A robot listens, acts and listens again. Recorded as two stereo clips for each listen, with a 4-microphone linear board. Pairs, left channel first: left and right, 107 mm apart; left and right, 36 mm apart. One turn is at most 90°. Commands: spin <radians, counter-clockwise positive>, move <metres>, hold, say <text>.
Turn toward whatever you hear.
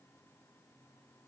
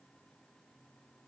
hold
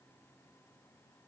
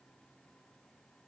hold
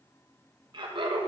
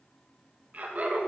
spin -0.87
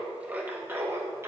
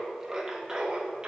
spin -0.44
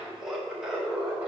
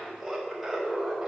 spin -0.26
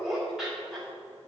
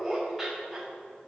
say Found it: laughter, straight ahead, 1 to 2 m away.